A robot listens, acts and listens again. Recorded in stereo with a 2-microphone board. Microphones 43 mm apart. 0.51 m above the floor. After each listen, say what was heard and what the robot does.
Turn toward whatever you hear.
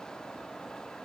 Keep listening.
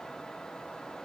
Keep listening.
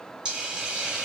The hiss: about 20° right or 160° right. Turn 20° right.
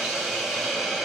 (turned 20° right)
Facing the hiss, 1 to 2 m away.